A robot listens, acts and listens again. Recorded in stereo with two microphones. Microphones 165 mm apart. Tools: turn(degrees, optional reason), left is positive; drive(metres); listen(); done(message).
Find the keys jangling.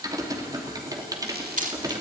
turn(degrees=-50, reason="The keys jangling: about 50° right or 130° right.")
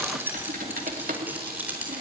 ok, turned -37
turn(degrees=-10, reason="So it is at 10° right.")
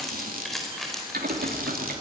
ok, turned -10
done("Facing the keys jangling.")